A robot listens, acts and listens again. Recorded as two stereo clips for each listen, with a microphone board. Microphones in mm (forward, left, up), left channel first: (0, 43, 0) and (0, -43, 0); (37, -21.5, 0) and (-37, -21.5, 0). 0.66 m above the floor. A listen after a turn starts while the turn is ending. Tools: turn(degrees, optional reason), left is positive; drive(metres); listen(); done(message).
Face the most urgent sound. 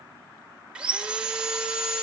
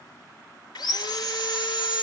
listen()
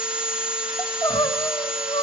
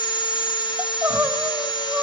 turn(degrees=125, reason="The crying: 125° left.")
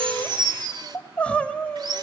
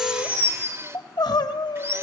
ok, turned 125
turn(degrees=15, reason="The crying is now 15° left.")
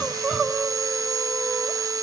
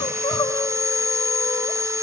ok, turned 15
done("Facing the crying.")